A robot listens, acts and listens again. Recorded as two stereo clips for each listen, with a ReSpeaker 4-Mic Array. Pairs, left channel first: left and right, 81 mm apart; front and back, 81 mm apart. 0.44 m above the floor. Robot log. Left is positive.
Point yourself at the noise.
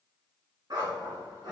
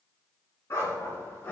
note: The dog barking: 60° right.
cmd yaw -60
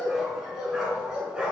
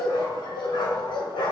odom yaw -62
note: The dog barking is now 15° right.
cmd yaw -15
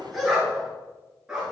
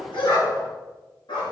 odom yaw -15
note: The dog barking is now 10° right.
cmd yaw -10
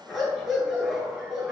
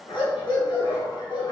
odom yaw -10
note: The dog barking is now 10° right.
cmd yaw -10
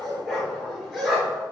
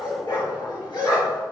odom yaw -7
end: Facing the dog barking, 2 to 4 m away.